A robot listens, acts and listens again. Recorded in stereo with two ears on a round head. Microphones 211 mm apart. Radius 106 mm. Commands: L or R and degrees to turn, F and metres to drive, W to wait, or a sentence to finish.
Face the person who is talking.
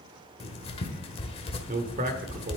R40
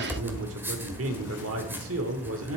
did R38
R100
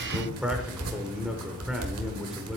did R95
Facing the man speaking, 1 to 2 m away.